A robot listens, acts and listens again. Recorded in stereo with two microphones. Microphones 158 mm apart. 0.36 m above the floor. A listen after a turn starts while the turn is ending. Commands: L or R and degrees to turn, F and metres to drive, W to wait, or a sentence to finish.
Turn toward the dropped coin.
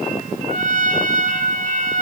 W
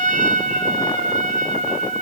W
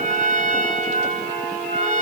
I can't make out a dropped coin, only a trumpet.